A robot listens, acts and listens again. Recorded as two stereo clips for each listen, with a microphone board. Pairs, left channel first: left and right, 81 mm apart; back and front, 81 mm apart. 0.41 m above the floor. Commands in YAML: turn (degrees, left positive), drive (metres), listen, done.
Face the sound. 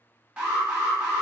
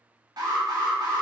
turn: -10
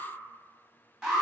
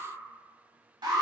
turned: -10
done: "Found it: an alarm, straight ahead."